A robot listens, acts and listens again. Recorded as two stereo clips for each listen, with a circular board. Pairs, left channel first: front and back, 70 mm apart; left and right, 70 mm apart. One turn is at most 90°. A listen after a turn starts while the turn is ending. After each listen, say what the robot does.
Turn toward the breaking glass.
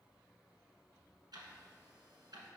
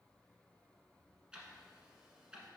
Keep listening.
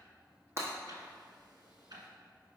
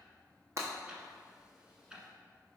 Turn 90° right.
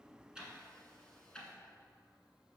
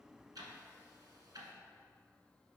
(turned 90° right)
Turn 45° right.
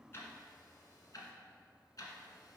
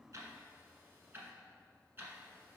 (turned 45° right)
I heard breaking glass from this way, but can't make it out now.